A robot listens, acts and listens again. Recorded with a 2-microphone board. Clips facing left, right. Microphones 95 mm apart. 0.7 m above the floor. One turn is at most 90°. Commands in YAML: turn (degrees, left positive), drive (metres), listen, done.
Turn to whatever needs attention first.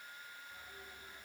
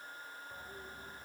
listen: true
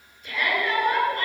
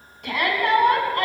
turn: -70
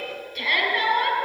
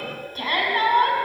turn: -35
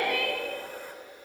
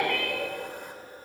turn: 10
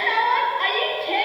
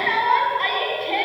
done: "Found it: a shout, straight ahead."